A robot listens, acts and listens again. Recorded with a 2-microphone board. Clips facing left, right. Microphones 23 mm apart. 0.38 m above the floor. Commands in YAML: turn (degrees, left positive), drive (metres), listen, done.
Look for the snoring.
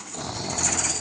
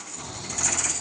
turn: 65
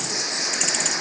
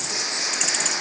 done: "Facing the snoring."